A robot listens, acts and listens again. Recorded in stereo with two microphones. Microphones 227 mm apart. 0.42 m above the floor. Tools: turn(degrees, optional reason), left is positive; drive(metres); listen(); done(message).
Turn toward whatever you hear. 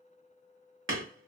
turn(degrees=-55, reason="The hammering: about 55° right or 125° right.")
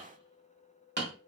turn(degrees=-55, reason="So it is at 55° right.")
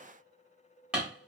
done("Facing the hammering, 1 to 2 m away.")